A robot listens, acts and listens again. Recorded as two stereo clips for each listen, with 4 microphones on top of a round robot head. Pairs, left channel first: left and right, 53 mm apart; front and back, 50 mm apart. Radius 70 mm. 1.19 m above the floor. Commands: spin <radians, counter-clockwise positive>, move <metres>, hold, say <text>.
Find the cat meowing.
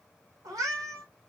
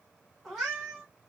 spin -1.66
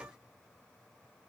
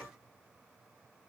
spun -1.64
hold
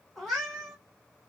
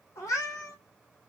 say Facing the cat meowing.